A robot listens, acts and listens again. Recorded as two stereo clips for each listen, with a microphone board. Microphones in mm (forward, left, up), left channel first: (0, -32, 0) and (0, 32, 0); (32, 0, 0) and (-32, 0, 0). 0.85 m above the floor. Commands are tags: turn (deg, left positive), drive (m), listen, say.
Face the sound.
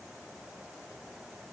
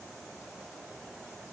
<listen/>
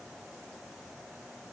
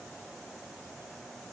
<listen/>
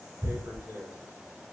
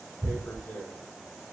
<turn deg="55"/>
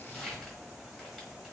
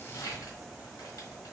<say>Facing the tearing paper.</say>